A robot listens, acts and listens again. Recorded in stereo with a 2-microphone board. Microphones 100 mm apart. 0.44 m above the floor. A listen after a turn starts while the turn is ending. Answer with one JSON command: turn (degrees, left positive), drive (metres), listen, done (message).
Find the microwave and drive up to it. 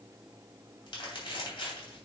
{"listen": true}
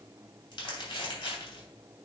{"listen": true}
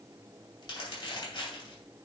{"done": "I can't make out a microwave to turn to."}